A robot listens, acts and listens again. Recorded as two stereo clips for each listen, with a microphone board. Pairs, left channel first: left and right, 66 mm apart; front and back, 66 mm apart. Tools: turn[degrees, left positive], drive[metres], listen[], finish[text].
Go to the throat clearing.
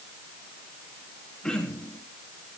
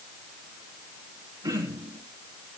Thought: The throat clearing: 165° left.
Action: turn[165]
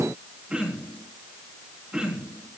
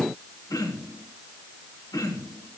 Thought: The throat clearing is now 15° right.
Action: turn[-15]
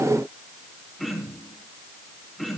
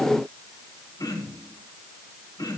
Action: drive[1.0]
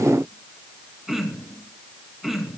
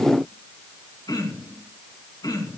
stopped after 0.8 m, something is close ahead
Action: finish[Something is in my way. I am facing the throat clearing but have not reached it.]